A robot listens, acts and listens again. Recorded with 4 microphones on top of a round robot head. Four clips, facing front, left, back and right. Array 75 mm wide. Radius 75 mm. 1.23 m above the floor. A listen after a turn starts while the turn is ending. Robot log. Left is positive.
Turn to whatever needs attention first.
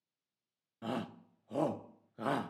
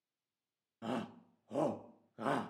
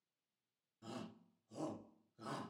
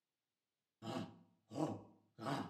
note: The shout: 40° left.
cmd yaw +40
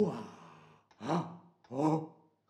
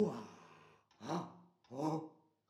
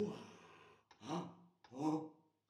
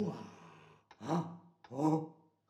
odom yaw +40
note: The shout is now 15° right.
cmd yaw -15
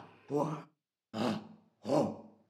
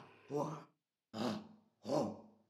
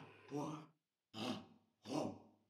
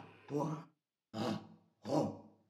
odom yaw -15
end: Facing the shout, 1 to 2 m away.